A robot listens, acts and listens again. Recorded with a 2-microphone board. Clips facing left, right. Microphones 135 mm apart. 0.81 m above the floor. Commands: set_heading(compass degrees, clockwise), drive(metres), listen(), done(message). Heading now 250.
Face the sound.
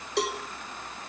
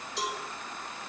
set_heading(180)
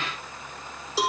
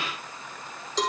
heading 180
set_heading(170)
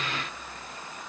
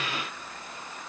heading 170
listen()
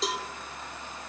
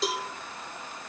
done("Facing the cowbell.")